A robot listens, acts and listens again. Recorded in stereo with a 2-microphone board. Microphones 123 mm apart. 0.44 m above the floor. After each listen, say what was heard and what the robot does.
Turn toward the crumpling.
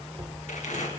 Turn 90° left.
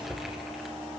Keep listening.
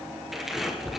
Facing the crumpling, 2 to 4 m away.